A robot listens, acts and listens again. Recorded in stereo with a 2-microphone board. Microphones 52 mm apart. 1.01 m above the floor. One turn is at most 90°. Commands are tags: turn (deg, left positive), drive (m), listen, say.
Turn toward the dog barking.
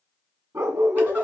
<turn deg="-70"/>
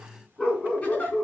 <say>Found it: a dog barking, straight ahead.</say>